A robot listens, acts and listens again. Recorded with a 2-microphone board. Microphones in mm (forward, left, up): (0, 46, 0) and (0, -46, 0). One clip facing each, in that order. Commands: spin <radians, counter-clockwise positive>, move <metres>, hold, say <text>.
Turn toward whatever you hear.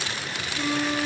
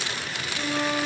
spin -0.52
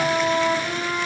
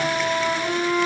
spin 0.44
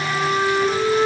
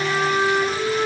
spin 0.17
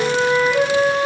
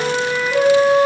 say Facing the flute.